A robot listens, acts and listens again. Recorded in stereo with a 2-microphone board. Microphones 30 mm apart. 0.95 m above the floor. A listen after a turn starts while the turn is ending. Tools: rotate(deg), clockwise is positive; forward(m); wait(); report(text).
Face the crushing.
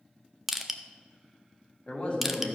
rotate(30)
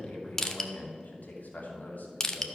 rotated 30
rotate(-20)
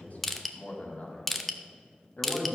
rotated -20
report("Facing the crushing.")